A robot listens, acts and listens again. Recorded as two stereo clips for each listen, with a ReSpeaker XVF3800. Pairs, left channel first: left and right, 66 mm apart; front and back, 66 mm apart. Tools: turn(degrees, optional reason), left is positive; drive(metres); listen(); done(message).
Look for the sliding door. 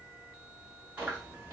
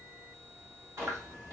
listen()
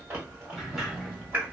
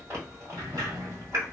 turn(degrees=-175, reason="The sliding door: 175° right.")
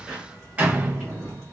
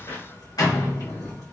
turn(degrees=-20, reason="The sliding door is now 20° right.")
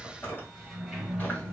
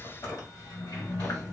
done("Facing the sliding door.")